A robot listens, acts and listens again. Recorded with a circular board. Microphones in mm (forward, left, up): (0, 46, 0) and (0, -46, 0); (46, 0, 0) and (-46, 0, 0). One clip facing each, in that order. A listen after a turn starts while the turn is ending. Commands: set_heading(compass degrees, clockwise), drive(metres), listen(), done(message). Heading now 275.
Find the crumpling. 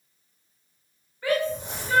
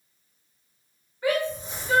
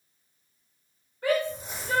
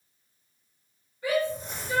set_heading(185)
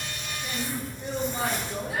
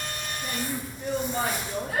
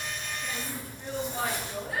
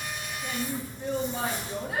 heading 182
done("Facing the crumpling.")